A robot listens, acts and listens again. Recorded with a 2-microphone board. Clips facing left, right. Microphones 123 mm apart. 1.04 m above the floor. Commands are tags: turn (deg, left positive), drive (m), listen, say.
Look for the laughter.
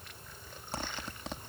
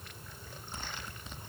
<listen/>
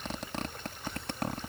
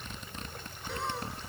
<turn deg="-75"/>
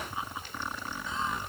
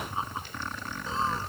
<turn deg="-35"/>
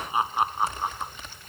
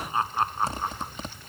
<turn deg="10"/>
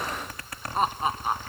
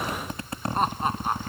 <say>Found it: laughter, straight ahead.</say>